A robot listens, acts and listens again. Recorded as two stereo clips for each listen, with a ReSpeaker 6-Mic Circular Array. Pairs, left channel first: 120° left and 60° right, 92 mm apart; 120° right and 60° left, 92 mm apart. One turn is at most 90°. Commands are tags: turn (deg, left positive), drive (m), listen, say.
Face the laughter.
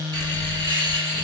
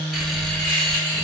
<turn deg="-45"/>
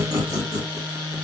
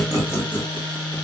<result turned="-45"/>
<turn deg="-15"/>
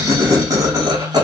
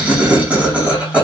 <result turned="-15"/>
<turn deg="-15"/>
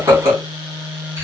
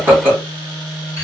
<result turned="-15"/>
<turn deg="-10"/>
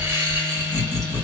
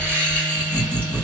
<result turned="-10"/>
<say>Found it: laughter, straight ahead, 2 to 4 m away.</say>